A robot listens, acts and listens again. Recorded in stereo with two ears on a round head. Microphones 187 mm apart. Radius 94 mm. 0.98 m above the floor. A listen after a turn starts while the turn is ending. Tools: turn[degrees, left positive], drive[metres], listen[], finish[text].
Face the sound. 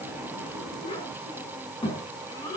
Thought: The child speaking: about 20° left or 160° left.
Action: turn[20]
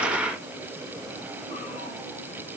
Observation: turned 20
Action: listen[]
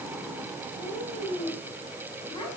Thought: The child speaking: about 20° left or 160° left.
Action: turn[20]
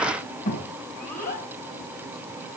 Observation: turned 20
Thought: So it is at 140° left.
Action: turn[140]
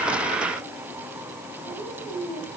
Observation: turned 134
Action: finish[Found it: a child speaking, straight ahead.]